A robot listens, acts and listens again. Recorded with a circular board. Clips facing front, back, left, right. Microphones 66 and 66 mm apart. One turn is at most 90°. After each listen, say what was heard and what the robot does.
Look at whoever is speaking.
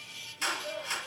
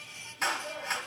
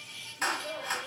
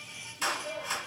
The child speaking: 95° left. Turn 90° left.
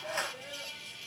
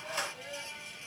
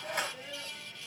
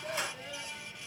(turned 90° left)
The child speaking is now 10° left. Turn 10° left.
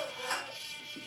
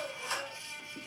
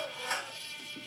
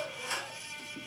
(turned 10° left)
Facing the child speaking.